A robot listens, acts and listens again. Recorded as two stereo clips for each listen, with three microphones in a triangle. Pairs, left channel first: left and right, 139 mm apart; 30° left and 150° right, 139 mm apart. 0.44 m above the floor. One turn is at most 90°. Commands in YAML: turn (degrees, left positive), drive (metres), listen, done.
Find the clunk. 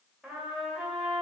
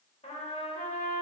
listen: true
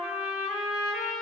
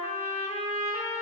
listen: true
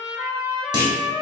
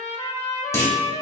turn: -35
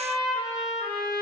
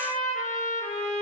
done: "I heard a clunk from this way, but can't make it out now."